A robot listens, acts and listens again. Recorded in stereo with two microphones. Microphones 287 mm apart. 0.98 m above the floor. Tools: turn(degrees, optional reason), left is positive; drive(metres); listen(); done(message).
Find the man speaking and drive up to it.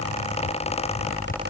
listen()
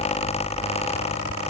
listen()
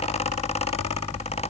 done("I can't make out a man speaking to turn to.")